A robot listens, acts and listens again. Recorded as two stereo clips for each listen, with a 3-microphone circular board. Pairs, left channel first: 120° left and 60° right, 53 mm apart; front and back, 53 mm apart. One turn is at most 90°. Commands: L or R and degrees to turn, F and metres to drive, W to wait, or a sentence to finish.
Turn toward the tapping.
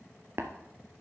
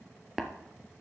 R90
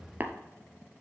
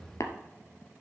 Facing the tapping, 1 to 2 m away.